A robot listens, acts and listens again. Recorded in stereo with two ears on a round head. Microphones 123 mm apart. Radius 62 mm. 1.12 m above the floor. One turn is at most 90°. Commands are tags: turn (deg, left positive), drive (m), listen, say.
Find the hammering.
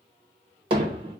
<turn deg="-40"/>
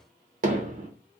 <turn deg="-90"/>
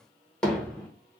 <say>Facing the hammering, under 1 m away.</say>